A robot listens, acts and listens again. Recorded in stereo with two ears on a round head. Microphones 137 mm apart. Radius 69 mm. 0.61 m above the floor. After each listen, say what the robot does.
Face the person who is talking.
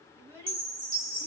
Turn 20° right.
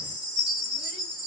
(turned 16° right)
Keep listening.
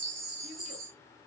Keep listening.
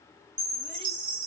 I heard a child speaking, but can't make it out now. It was about 5° right or 145° right.